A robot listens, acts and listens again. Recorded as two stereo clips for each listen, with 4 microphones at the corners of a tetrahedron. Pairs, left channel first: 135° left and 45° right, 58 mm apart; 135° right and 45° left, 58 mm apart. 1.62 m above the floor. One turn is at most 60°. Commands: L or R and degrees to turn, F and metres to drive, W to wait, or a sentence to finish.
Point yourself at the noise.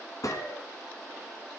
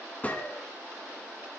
L60
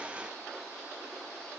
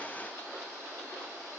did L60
L60
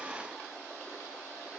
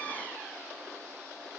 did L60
L40
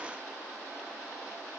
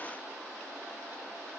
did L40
I heard a gunshot from this way, but can't make it out now.